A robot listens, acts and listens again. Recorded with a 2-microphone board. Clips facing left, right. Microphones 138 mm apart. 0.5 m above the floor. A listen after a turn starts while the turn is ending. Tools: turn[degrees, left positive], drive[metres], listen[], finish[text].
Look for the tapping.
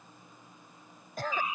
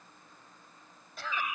Action: listen[]
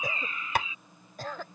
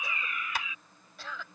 Thought: The tapping: about 55° left or 125° left.
Action: turn[55]
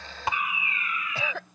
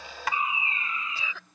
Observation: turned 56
Action: listen[]
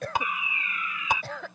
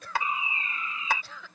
Thought: So it is at 20° left.
Action: turn[20]
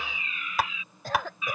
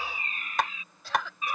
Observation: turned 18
Action: finish[Facing the tapping.]